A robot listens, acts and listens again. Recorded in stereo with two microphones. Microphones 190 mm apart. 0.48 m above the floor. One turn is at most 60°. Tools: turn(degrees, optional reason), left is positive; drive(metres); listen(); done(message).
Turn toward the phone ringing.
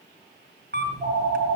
turn(degrees=-25, reason="The phone ringing: about 25° right or 155° right.")
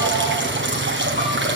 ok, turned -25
listen()
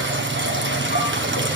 listen()
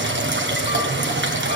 done("I heard a phone ringing, but can't make it out now. It was about straight ahead or 130° right.")